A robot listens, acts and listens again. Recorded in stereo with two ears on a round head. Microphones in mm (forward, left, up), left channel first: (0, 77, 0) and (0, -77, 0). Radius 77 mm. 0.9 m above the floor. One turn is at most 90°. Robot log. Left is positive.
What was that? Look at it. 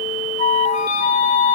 note: The flute: about 45° left or 135° left.
cmd yaw +45
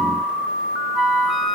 end: Facing the flute.